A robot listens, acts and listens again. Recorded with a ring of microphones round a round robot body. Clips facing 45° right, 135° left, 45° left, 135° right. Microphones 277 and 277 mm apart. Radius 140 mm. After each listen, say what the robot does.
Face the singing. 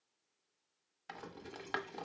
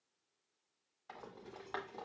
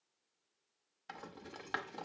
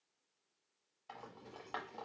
Keep listening.
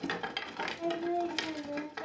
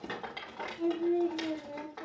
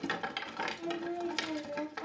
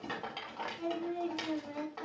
Turn 115° right.
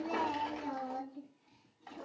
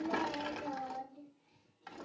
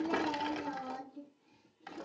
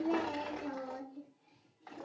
Turn 30° right.
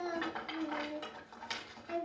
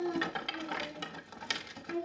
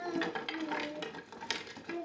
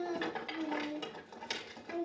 Facing the singing, over 4 m away.